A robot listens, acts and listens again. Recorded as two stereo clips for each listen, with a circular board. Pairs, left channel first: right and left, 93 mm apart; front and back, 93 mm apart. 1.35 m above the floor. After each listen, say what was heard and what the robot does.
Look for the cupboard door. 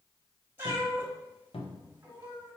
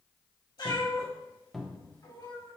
The cupboard door: 90° right. Turn 90° right.
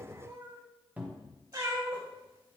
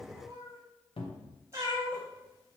The cupboard door is now 15° left. Turn 15° left.
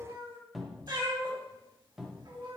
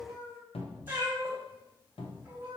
Facing the cupboard door, under 1 m away.